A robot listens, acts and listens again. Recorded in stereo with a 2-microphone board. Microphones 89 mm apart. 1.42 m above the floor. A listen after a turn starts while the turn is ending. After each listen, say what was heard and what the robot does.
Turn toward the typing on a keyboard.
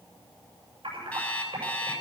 The typing on a keyboard: about 75° right or 105° right. Turn 75° right.
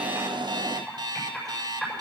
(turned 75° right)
Facing the typing on a keyboard, over 4 m away.